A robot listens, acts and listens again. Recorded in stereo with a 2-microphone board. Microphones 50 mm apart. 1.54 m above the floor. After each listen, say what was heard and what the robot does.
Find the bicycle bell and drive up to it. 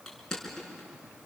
Keep listening.
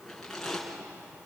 Keep listening.
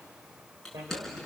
Turn 90° right.
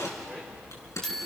Drive 1.0 m forward.
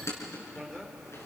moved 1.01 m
The bicycle bell is now 15° left. Turn 15° left.
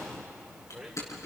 Drive 1.0 m forward.
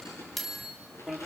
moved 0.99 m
Drive 1.0 m forward.
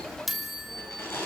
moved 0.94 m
Drive 1.0 m forward.
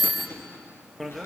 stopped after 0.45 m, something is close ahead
Arrived at the bicycle bell, straight ahead.